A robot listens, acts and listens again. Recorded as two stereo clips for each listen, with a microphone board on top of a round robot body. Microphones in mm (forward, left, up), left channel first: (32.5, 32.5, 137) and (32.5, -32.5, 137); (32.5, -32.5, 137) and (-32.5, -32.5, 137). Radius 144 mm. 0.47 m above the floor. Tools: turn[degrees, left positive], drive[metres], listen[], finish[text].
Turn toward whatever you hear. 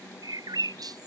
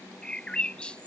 Thought: The bird: 75° right.
Action: turn[-75]
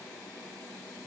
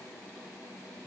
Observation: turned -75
Action: listen[]
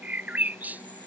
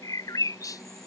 Thought: The bird is now 25° right.
Action: turn[-25]
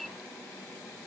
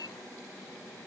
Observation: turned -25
Action: finish[Found it: a bird, straight ahead.]